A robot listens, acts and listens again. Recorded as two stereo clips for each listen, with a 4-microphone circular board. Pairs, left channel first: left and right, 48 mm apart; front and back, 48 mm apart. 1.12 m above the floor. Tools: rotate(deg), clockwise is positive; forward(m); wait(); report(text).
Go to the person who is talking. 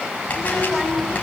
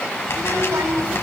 rotate(-170)
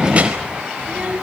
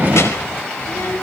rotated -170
rotate(30)
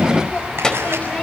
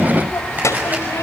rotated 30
rotate(-15)
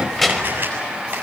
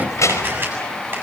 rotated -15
forward(1.0)
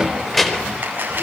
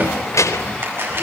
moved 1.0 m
forward(1.0)
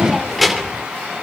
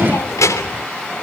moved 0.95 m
forward(1.0)
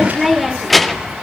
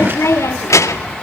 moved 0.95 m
forward(1.0)
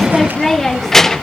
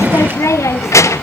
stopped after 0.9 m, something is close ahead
report("Arrived at the child speaking, straight ahead.")